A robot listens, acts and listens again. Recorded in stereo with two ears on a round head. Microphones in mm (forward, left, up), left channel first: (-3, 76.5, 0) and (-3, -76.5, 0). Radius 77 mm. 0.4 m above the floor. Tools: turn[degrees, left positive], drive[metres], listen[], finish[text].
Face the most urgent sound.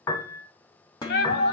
Thought: The shout: about 65° left or 115° left.
Action: turn[65]
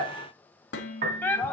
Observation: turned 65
Thought: So it is at 15° left.
Action: turn[15]
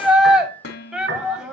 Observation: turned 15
Action: finish[Facing the shout, 1 to 2 m away.]